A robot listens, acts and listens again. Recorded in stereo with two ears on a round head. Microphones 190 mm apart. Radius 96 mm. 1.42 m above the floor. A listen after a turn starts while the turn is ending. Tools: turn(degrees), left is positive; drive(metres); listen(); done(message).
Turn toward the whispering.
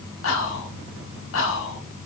turn(degrees=65)
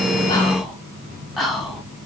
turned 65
done("Found it: whispering, straight ahead.")